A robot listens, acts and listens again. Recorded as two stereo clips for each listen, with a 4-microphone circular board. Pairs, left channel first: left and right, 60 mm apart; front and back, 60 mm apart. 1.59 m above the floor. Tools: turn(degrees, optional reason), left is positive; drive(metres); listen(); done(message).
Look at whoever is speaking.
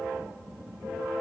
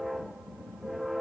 listen()
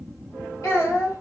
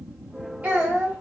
turn(degrees=115, reason="The child speaking: 115° left.")
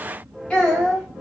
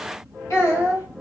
turn(degrees=20, reason="The child speaking is now 20° left.")
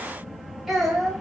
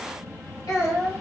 done("Facing the child speaking.")